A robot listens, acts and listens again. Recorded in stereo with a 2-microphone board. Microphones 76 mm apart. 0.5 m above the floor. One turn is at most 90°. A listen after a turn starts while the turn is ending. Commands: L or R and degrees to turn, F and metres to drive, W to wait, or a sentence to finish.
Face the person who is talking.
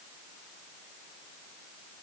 W
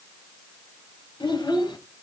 L90
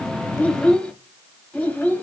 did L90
L25
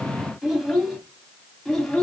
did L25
Found it: a child speaking, straight ahead.